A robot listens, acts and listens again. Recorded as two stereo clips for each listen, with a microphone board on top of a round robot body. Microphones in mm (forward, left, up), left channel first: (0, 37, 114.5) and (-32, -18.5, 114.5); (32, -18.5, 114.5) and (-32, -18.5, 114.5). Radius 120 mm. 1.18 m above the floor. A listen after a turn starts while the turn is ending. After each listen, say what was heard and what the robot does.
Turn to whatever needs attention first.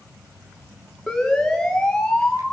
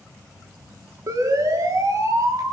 The siren: 145° left. Turn 145° left.
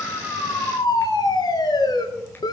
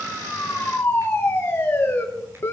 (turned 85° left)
The siren is now 60° left. Turn 60° left.
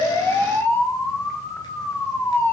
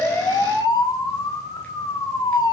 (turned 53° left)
The siren is now 10° left. Turn 10° left.
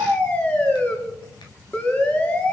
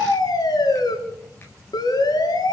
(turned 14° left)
Found it: a siren, straight ahead, over 4 m away.